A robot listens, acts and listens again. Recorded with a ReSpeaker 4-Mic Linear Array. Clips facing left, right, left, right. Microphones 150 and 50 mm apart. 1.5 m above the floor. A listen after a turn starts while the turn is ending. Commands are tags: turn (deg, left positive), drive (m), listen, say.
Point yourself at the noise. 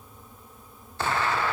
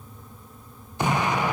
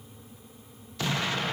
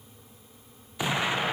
<turn deg="-15"/>
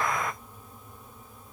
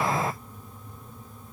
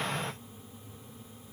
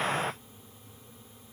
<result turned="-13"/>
<turn deg="-150"/>
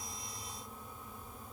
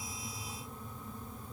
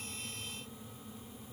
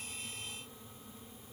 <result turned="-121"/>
<turn deg="-30"/>
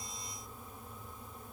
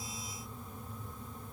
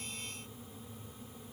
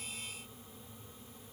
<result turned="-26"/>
<say>I heard an explosion from this way, but can't make it out now.</say>